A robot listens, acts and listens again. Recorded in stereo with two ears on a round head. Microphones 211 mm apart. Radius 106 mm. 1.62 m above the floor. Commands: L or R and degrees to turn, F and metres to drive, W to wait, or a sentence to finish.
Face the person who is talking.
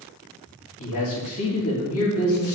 L65
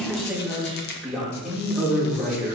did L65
Facing the man speaking.